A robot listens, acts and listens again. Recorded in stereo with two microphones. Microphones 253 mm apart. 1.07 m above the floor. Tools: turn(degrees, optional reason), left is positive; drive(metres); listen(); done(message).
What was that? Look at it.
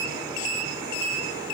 listen()
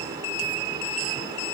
listen()
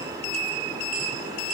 done("I can't make out anything to turn to.")